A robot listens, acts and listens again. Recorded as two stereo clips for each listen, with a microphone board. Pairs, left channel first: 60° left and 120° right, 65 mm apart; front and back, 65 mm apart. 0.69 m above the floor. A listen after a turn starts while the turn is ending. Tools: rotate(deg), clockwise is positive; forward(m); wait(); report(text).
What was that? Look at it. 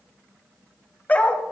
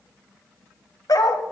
report("Found it: a dog barking, straight ahead.")